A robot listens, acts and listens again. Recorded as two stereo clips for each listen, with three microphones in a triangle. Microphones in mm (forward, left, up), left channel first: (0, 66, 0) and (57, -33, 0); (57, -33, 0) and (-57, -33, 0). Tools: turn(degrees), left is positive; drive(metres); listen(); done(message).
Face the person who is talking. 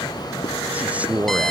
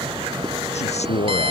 turn(degrees=20)
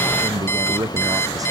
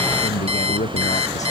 done("Found it: a man speaking, straight ahead.")